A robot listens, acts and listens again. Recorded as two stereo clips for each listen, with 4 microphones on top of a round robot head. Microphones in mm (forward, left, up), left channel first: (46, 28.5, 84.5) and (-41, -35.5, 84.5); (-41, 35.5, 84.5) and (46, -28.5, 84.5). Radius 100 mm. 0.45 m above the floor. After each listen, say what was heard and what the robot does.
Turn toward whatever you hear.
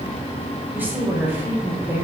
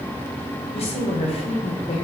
The woman speaking: 145° left. Turn 145° left.
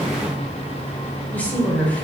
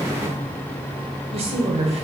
The woman speaking is now 40° right. Turn 40° right.
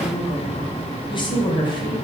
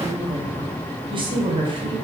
Found it: a woman speaking, straight ahead.